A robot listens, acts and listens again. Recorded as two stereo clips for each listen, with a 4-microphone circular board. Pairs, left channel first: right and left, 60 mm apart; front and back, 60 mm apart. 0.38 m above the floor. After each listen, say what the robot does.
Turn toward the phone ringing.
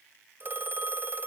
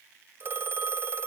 Turn 135° left.
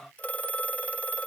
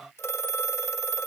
Turn 30° right.
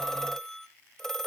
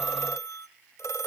Turn 10° right.
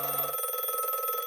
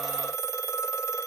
Found it: a phone ringing, straight ahead.